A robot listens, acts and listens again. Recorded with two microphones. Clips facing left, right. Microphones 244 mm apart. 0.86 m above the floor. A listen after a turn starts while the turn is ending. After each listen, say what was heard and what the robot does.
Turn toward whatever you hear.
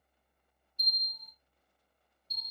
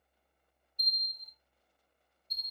Turn 90° left.
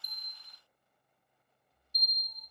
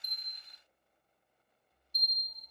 So it is at 10° right. Turn 10° right.
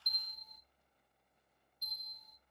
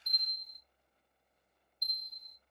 Found it: a bell, straight ahead.